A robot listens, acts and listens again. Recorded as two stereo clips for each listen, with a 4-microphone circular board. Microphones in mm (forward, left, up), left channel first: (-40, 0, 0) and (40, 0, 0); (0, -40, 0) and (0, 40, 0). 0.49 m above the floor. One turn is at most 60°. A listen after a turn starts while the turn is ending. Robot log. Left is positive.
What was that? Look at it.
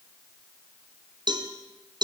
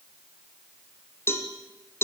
note: The cowbell: 30° right.
cmd yaw -30
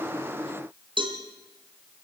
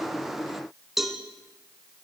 end: Found it: a cowbell, straight ahead.